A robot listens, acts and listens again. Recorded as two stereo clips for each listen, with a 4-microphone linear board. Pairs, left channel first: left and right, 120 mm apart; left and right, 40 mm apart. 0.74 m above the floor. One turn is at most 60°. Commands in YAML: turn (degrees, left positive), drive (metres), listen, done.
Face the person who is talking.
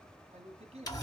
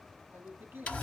turn: -60
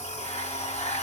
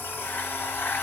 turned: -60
listen: true
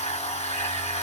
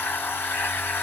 listen: true
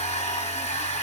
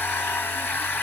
done: "I heard a man speaking, but can't make it out now. It was about 5° right or 55° right."